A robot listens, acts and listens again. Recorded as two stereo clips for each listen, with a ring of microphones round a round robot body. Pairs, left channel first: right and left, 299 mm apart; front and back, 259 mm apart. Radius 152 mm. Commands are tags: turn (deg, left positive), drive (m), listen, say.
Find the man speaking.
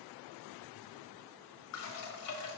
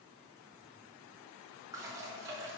<listen/>
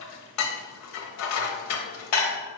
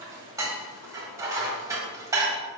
<listen/>
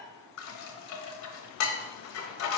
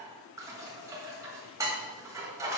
<say>I can't make out a man speaking to turn to.</say>